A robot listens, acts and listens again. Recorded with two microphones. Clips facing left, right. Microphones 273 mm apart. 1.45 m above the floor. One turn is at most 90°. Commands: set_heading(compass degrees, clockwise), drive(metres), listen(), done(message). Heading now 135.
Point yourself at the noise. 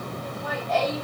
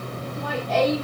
set_heading(225)
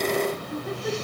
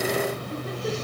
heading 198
set_heading(228)
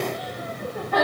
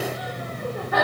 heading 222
done("Found it: laughter, straight ahead, 2 to 4 m away.")